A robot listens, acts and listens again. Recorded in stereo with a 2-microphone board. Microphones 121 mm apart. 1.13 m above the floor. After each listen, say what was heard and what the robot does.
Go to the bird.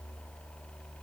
Keep listening.
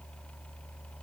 Keep listening.
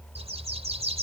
The bird: about 60° right or 120° right. Turn 60° right.
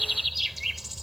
Drive 1.0 m forward.
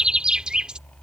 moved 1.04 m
The bird is now 10° right. Turn 10° right.
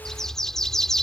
Drive 1.0 m forward.
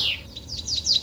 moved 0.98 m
Drive 1.0 m forward.
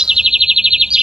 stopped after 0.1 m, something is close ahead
I am next to the bird.